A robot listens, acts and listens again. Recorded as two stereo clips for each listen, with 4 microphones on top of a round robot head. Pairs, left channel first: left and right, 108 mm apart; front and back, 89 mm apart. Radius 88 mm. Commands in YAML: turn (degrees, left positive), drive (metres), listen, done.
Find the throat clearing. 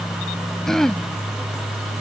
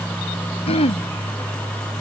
done: "Facing the throat clearing."